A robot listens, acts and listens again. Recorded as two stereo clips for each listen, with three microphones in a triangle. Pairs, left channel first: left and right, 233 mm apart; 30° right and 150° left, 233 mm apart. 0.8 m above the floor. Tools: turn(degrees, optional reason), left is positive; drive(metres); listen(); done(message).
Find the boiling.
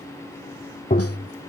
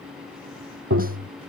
listen()
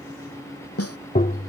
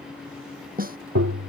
listen()
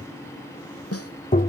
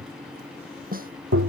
done("I can't make out boiling, only tapping and a snare drum.")